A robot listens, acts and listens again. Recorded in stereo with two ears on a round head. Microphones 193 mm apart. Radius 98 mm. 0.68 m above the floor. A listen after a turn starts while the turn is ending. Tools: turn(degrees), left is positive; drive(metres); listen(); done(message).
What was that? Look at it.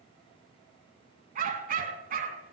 turn(degrees=-40)
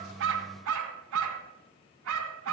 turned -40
turn(degrees=-95)
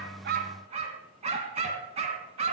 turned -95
turn(degrees=-30)
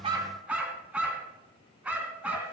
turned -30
done("Facing the dog barking, 1 to 2 m away.")